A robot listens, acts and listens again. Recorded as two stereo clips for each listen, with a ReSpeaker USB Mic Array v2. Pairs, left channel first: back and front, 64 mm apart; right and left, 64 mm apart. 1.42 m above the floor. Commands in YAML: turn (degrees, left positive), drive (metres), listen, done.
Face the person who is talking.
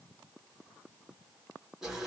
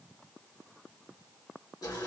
listen: true
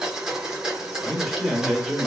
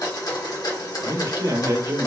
turn: 95
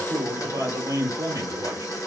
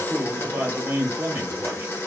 turn: 30
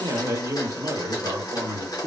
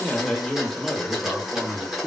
turn: -10
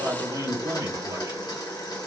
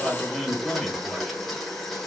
done: "Facing the man speaking, 1 to 2 m away."